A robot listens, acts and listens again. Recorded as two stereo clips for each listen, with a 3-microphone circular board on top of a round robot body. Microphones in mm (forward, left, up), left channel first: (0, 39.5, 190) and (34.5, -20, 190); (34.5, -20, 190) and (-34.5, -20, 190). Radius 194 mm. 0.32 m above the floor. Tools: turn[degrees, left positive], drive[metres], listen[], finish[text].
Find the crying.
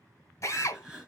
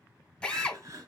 Thought: The crying: 135° right.
Action: turn[-135]
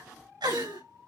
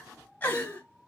Thought: The crying is now 60° right.
Action: turn[-60]
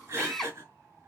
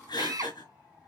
Action: finish[Found it: crying, straight ahead, over 4 m away.]